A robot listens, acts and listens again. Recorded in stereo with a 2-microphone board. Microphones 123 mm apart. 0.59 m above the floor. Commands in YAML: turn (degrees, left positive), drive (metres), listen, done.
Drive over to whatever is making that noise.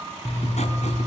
turn: 65
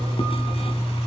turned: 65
turn: 50
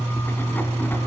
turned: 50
turn: 15
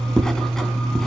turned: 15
drive: 1.0
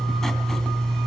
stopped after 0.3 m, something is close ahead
done: "Blocked. The writing is further on, straight ahead."